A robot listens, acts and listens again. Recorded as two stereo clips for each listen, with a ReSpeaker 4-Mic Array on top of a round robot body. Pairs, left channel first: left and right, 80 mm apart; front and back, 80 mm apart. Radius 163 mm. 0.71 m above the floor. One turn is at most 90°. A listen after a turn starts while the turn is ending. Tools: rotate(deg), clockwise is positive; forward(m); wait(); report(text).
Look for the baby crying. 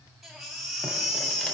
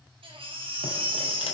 rotate(-90)
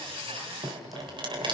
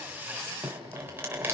rotate(-90)
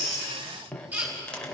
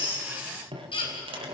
rotate(20)
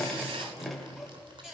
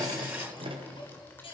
wait()
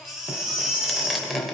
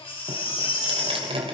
rotate(10)
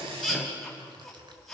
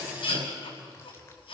report("Found it: a baby crying, straight ahead.")